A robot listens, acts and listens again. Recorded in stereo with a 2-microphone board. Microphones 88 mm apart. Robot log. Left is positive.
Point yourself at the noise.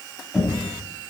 cmd yaw -30
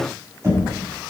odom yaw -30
note: So it is at 145° right.
cmd yaw -145
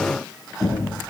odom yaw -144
end: Facing the knocking.